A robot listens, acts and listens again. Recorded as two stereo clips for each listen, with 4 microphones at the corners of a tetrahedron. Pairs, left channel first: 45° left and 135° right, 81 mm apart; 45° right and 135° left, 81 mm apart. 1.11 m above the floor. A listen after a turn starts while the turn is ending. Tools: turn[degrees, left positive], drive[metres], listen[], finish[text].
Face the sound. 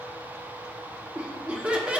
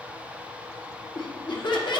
Thought: The laughter: 60° right.
Action: turn[-60]
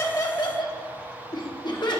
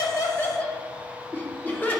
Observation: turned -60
Thought: The laughter is now 20° left.
Action: turn[20]
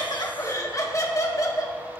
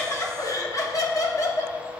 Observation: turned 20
Action: finish[Facing the laughter.]